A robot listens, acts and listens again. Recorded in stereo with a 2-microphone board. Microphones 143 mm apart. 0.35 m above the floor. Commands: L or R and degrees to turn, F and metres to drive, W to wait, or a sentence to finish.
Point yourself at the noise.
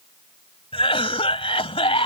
L40
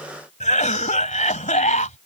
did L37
L90
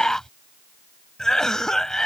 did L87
Facing the cough.